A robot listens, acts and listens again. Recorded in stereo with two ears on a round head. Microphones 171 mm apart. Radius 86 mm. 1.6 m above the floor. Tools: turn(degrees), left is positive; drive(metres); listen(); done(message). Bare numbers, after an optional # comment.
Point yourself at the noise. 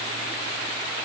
listen()
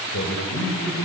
turn(90)
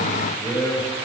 # So it is at 15° left.
turn(15)
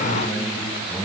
# The man speaking is now 10° left.
turn(10)
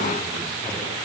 listen()
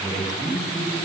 done("Facing the man speaking.")